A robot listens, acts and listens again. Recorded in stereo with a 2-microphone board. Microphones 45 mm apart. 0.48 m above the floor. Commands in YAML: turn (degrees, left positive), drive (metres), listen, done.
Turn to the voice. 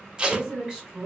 turn: -25
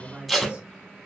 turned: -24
turn: -125
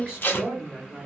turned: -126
done: "Found it: a woman speaking, straight ahead, 1 to 2 m away."